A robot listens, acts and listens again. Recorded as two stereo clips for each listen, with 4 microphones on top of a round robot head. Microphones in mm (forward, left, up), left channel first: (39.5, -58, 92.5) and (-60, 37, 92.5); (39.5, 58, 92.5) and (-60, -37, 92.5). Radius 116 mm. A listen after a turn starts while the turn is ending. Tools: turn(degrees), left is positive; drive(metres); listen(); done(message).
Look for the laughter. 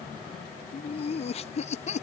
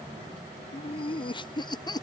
turn(degrees=-15)
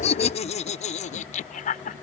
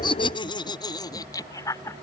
turn(degrees=-25)
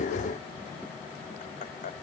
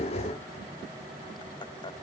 listen()
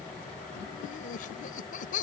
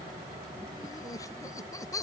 turn(degrees=-20)
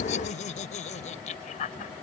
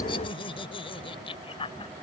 turn(degrees=-10)
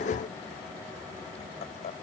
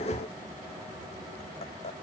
done("Found it: laughter, straight ahead.")